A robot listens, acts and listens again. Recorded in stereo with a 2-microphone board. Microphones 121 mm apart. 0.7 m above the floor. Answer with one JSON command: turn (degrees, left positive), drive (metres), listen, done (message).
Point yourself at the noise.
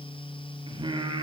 {"turn": -45}
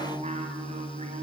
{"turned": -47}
{"turn": -100}
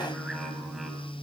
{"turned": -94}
{"listen": true}
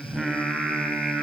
{"done": "Found it: singing, straight ahead."}